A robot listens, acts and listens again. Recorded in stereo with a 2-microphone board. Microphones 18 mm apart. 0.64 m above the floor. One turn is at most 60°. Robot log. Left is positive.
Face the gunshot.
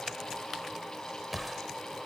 cmd yaw +30
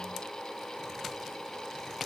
cmd idle
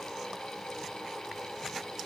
end: I heard a gunshot, but can't make it out now. It was about 30° right or 150° left.